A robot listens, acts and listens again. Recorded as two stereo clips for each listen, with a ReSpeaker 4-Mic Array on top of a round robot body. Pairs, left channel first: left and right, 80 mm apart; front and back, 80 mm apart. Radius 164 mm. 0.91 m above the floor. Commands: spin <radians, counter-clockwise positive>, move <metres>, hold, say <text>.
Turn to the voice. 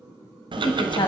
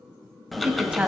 spin 1.75
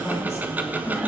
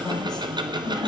hold
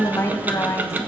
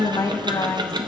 spin 0.52
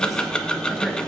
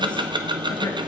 hold
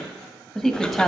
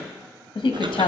say Found it: a woman speaking, straight ahead.